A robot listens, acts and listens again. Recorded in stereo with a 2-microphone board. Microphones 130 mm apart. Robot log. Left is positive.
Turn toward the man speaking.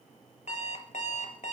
cmd idle
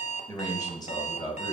note: The man speaking: about 40° left or 140° left.
cmd yaw +40
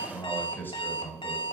note: So it is at 20° left.
cmd yaw +20
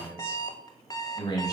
note: The man speaking is now 30° left.
cmd yaw +30
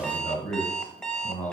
note: The man speaking is now 10° left.
cmd yaw +10
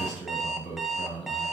end: Facing the man speaking, 2 to 4 m away.